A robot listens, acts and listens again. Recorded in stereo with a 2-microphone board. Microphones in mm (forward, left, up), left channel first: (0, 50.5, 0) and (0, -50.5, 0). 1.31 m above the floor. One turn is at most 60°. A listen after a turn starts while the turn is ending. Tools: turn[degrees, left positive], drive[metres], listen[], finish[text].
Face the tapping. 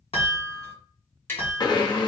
Thought: The tapping: about 25° left or 155° left.
Action: turn[25]
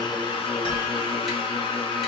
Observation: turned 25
Action: listen[]
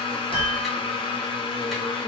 Action: listen[]
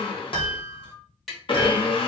Action: finish[Found it: tapping, straight ahead, 1 to 2 m away.]